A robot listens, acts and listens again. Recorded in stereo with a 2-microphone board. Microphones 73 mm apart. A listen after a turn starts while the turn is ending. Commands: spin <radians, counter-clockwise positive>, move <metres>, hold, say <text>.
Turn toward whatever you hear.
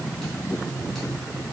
hold
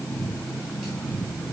hold
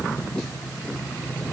say I can't make out anything to turn to.